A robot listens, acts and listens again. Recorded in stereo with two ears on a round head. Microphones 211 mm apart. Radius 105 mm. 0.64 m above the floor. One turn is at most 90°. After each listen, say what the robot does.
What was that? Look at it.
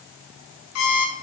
Turn 70° left.
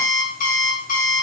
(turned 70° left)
Turn 35° left.
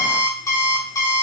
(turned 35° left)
Turn 15° left.
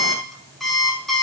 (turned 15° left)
Found it: an alarm clock, straight ahead.